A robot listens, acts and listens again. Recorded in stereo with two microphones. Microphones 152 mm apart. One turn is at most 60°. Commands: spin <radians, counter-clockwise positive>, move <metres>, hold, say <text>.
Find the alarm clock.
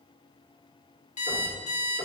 spin 0.87
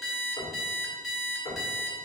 say Found it: an alarm clock, straight ahead.